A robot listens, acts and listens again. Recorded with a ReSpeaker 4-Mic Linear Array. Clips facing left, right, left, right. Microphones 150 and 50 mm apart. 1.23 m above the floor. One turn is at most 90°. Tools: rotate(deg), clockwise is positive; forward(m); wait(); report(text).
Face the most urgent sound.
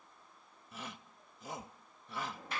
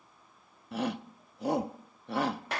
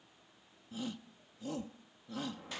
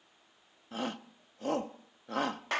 rotate(70)
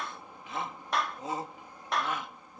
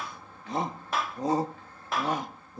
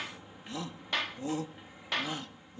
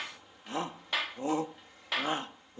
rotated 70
rotate(35)
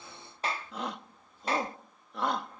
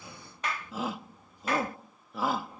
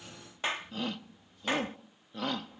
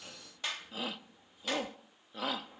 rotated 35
report("Found it: a shout, straight ahead.")